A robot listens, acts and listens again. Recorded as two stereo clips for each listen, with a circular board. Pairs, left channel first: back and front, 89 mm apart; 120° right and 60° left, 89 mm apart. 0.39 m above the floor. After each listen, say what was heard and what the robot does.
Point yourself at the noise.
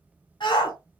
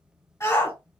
The shout: 165° right. Turn 165° right.
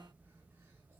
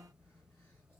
Keep listening.
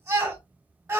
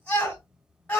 The shout is now 50° right. Turn 50° right.
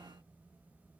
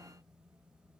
Keep listening.
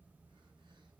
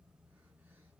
Keep listening.
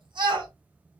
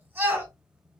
Found it: a shout, straight ahead.